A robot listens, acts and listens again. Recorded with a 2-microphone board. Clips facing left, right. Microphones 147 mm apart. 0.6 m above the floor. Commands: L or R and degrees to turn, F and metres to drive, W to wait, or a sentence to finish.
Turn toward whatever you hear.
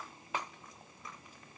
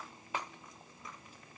W
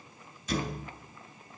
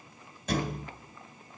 R70
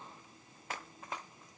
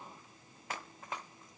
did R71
W
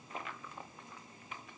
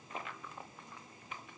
I heard a thud, but can't make it out now. It was about straight ahead or 40° right.